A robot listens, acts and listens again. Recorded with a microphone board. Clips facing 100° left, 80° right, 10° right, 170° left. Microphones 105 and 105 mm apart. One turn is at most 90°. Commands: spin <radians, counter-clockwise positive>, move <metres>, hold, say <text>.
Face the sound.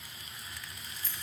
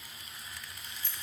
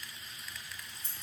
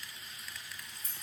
spin 0.87
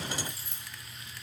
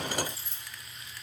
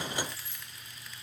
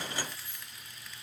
spin -0.35
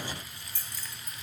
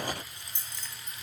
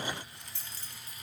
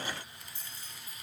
spin -0.26
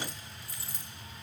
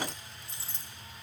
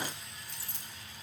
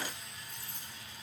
spin -0.35
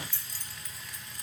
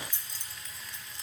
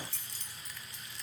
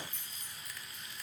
spin -0.26
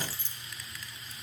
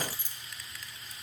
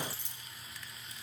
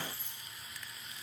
say Found it: keys jangling, straight ahead, 1 to 2 m away.